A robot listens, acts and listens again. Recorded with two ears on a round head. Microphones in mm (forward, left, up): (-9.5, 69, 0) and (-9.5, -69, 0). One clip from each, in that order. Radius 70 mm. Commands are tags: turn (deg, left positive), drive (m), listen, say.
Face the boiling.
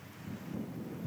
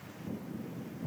<listen/>
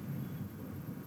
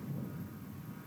<listen/>
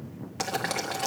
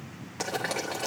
<turn deg="25"/>
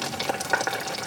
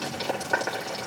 <turn deg="130"/>
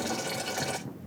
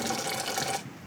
<turn deg="-20"/>
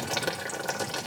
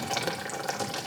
<say>Facing the boiling.</say>